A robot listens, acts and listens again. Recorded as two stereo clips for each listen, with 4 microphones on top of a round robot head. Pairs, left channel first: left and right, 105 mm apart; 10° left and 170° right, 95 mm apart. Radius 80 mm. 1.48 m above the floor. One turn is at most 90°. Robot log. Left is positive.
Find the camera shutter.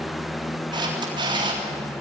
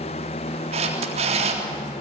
note: The camera shutter: 145° right.
cmd yaw -90
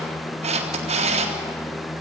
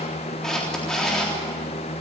note: The camera shutter is now 75° right.
cmd yaw -75
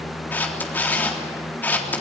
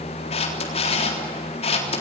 note: The camera shutter is now 15° left.
cmd yaw +15
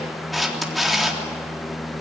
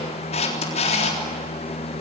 end: Facing the camera shutter, 2 to 4 m away.